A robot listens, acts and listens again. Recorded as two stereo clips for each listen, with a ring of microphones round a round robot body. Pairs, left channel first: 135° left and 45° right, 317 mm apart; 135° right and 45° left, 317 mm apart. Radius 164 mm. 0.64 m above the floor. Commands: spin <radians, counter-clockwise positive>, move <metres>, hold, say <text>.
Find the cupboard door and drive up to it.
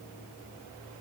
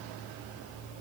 hold
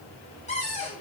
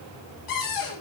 spin -2.71
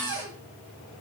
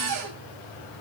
move 1.0
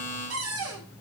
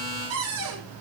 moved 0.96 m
move 1.0
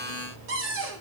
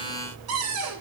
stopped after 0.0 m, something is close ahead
say Blocked. The cupboard door is further on, straight ahead.